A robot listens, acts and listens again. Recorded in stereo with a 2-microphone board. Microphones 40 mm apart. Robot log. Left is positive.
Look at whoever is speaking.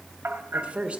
note: The woman speaking: about 25° right or 155° right.
cmd yaw -25
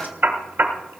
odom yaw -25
cmd idle
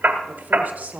note: So it is at 120° right.
cmd yaw -120
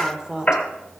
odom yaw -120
note: The woman speaking is now 25° right.
cmd yaw -25
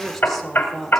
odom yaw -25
end: Facing the woman speaking, 1 to 2 m away.